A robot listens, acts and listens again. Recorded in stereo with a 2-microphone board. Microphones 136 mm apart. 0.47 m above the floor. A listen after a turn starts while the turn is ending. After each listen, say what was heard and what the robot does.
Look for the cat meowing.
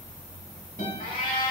Turn 90° left.
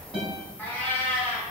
So it is at 10° left. Turn 10° left.
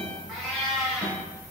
Facing the cat meowing, 1 to 2 m away.